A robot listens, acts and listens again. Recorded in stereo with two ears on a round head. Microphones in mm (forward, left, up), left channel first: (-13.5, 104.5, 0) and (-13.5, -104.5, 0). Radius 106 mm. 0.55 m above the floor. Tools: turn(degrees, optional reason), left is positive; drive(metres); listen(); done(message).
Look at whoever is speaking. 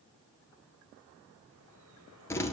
listen()
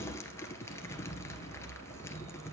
listen()
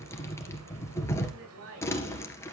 turn(degrees=-65, reason="The woman speaking: about 65° right or 115° right.")
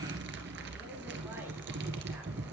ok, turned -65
listen()
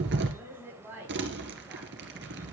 turn(degrees=-10, reason="So it is at 10° right.")
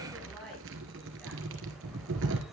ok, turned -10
done("Found it: a woman speaking, straight ahead.")